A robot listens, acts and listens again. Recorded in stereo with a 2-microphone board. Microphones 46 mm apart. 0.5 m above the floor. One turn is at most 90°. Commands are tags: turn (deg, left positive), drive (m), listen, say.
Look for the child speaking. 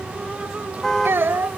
<turn deg="-60"/>
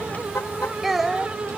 <say>Facing the child speaking.</say>